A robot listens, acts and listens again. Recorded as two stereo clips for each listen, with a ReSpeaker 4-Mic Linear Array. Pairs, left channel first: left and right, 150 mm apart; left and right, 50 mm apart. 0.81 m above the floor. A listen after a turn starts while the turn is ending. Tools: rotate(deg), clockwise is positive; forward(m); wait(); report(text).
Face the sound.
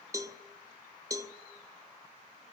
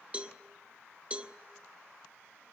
rotate(25)
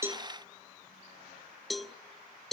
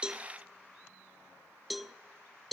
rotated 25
report("Facing the cowbell.")